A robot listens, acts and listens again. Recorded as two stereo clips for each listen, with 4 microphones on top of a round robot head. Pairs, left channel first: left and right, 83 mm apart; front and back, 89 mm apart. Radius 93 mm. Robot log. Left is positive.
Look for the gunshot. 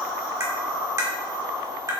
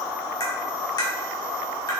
cmd idle
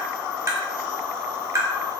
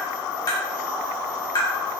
cmd idle
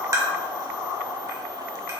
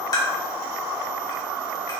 end: I can't make out a gunshot, only tapping.